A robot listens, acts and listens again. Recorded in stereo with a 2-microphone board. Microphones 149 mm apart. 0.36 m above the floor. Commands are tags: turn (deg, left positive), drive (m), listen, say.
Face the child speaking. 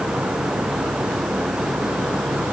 <listen/>
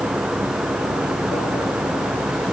<listen/>
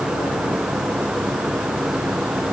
<say>I can't make out a child speaking.</say>